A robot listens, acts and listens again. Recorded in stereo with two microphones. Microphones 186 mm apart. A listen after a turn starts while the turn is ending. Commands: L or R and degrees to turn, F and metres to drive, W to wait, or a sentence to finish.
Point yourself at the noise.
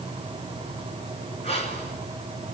L35
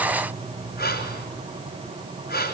L110
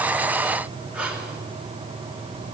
R10
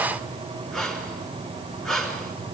Found it: breathing, straight ahead.